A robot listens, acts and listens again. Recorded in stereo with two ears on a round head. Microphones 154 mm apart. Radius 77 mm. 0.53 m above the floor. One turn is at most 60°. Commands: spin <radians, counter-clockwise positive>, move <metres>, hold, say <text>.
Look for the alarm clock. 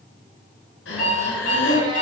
spin 0.79
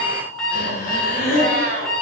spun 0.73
say Found it: an alarm clock, straight ahead.